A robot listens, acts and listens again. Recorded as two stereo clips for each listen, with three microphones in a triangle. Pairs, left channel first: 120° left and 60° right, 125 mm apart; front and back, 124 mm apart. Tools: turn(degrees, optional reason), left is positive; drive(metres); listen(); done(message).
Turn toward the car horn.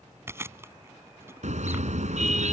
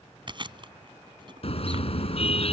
turn(degrees=-40, reason="The car horn: 40° right.")
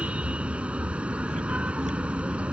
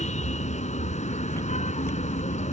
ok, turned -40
turn(degrees=20, reason="The car horn is now 20° left.")
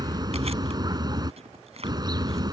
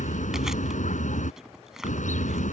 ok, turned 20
done("Facing the car horn.")